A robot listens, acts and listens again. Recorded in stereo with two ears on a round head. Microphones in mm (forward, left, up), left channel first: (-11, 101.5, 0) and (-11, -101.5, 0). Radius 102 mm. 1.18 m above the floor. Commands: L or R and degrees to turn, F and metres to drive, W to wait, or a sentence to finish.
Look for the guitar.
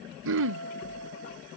R90
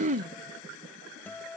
L10
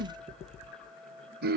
Found it: a guitar, straight ahead.